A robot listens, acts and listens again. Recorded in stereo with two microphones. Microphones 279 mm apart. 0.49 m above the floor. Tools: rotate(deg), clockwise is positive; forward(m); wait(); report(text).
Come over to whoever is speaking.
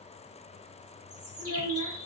rotate(-75)
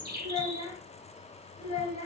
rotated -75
rotate(-25)
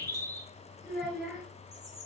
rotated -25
forward(1.0)
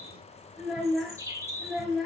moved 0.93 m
forward(1.0)
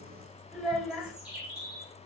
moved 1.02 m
forward(1.0)
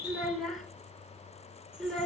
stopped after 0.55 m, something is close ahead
report("I am next to the child speaking.")